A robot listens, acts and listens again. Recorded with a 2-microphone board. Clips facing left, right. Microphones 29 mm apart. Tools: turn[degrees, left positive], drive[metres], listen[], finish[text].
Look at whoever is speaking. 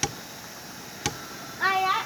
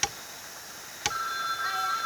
Action: turn[90]
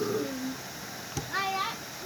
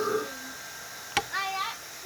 Action: finish[Found it: a child speaking, straight ahead.]